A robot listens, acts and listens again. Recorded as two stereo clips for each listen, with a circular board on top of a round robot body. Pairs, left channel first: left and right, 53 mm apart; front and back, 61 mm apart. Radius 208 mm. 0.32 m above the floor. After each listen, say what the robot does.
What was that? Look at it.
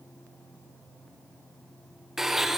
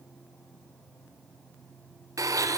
Turn 175° right.
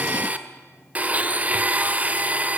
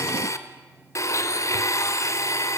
Turn 30° right.
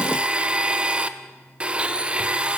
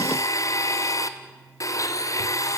Turn 25° right.
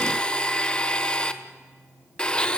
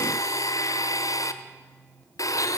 Turn 20° left.
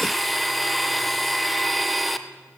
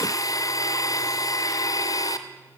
Found it: a blender, straight ahead.